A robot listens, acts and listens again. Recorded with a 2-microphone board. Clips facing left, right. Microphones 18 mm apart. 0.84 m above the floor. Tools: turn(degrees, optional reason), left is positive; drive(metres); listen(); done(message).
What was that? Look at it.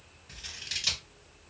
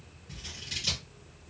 turn(degrees=30, reason="The scissors: about 30° left or 150° left.")
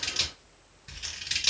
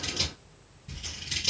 turn(degrees=120, reason="So it is at 120° left.")
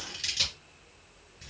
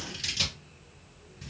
done("Facing the scissors.")